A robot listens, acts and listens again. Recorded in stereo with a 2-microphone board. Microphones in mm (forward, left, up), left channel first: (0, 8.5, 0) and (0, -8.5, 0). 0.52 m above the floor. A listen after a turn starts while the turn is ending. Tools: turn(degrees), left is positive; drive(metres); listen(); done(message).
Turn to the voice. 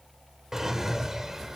listen()
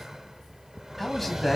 turn(degrees=30)
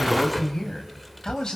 turn(degrees=140)
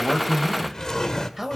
turn(degrees=-10)
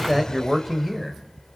done("Facing the man speaking, 2 to 4 m away.")